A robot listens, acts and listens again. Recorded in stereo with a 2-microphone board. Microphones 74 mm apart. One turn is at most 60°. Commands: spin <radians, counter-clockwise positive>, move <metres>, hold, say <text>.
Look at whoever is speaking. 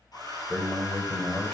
spin 0.52
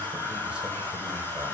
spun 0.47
hold
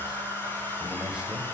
hold
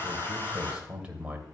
spin -0.35
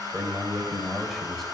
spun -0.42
say Facing the man speaking, 2 to 4 m away.